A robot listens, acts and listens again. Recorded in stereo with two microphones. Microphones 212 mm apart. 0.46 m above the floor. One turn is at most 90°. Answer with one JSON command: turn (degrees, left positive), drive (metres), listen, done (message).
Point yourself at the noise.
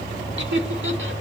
{"turn": -70}
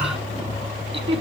{"turn": -30}
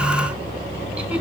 {"listen": true}
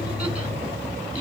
{"listen": true}
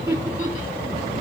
{"turn": -10}
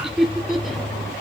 {"done": "Facing the laughter, over 4 m away."}